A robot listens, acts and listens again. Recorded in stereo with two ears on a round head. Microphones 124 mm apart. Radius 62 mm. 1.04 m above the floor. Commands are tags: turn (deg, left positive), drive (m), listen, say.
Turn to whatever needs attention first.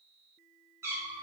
<listen/>
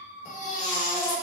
<turn deg="55"/>
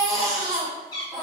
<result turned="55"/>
<say>Found it: a baby crying, straight ahead.</say>